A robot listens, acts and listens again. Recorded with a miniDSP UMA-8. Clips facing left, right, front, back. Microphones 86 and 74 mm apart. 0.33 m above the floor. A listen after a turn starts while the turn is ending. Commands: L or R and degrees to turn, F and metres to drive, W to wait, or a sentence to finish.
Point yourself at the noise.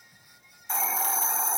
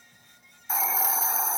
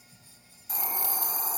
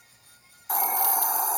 R175
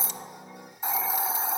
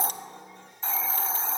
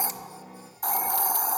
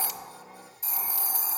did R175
L15
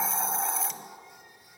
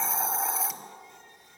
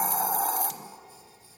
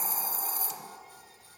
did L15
Found it: a hiss, straight ahead, under 1 m away.